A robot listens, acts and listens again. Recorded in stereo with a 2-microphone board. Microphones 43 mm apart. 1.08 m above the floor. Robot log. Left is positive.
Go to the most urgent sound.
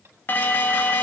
note: The alarm: about 45° left or 135° left.
cmd yaw +45
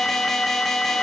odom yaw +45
cmd fwd 1.0
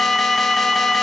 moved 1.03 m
cmd fwd 1.0
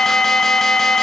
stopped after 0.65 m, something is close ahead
note: The alarm is now 15° left.
cmd yaw +15
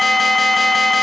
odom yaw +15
end: Arrived at the alarm, straight ahead.